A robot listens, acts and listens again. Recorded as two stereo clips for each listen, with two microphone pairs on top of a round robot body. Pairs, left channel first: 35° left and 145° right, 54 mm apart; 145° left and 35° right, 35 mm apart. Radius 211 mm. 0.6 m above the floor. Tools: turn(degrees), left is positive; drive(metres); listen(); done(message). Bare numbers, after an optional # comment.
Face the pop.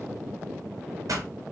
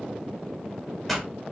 # The pop: 125° right.
turn(-125)
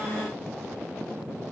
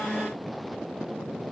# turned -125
done("I heard a pop from this way, but can't make it out now.")